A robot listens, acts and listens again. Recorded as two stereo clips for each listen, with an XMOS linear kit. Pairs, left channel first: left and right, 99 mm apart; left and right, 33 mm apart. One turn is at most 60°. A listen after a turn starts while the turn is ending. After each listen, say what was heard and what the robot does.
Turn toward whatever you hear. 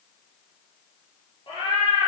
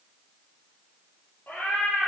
Turn 60° left.
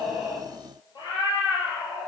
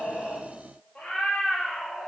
So it is at 55° left. Turn 55° left.
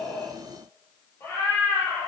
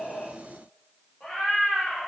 The cat meowing is now 25° left. Turn 25° left.
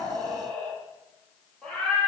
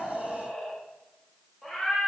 Found it: a cat meowing, straight ahead, over 4 m away.